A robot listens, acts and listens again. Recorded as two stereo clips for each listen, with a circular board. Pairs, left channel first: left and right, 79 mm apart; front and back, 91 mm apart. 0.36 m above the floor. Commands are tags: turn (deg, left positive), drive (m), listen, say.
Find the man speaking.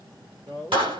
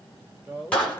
<turn deg="-115"/>
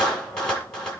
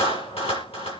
<listen/>
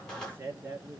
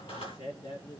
<turn deg="-25"/>
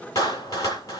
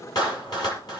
<listen/>
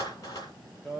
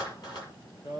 <say>Found it: a man speaking, straight ahead.</say>